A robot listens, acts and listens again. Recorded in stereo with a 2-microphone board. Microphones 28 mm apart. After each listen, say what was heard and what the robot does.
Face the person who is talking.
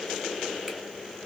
Keep listening.
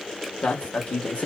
The man speaking: about 50° left or 130° left. Turn 50° left.
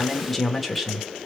So it is at 10° right. Turn 10° right.
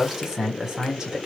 The man speaking is now 25° right. Turn 25° right.
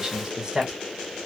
The man speaking is now 25° right. Turn 25° right.
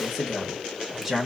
Found it: a man speaking, straight ahead.